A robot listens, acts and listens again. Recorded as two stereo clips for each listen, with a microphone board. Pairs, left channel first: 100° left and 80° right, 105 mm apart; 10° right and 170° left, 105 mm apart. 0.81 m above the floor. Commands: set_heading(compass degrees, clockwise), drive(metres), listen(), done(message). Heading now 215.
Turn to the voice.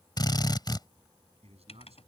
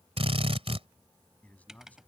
set_heading(305)
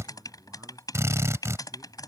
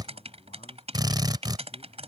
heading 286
set_heading(301)
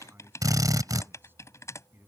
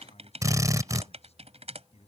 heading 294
set_heading(304)
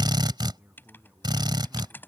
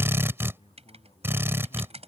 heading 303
done("Found it: a man speaking, straight ahead.")